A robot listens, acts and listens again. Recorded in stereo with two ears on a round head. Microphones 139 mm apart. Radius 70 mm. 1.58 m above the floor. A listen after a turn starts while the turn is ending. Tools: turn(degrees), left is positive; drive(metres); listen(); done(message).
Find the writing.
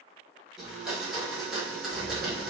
turn(degrees=-45)
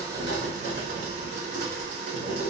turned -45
turn(degrees=-75)
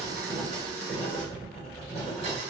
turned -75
turn(degrees=10)
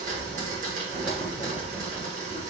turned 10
done("Found it: writing, straight ahead, 1 to 2 m away.")